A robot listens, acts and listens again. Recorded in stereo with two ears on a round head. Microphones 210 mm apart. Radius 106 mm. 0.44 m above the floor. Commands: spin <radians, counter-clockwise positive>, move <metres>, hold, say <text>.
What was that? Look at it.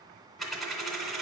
spin 0.52
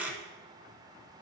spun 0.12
spin -0.52
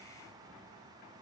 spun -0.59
hold
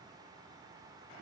say I heard a dropped coin, but can't make it out now. It was about 30° left or 140° right.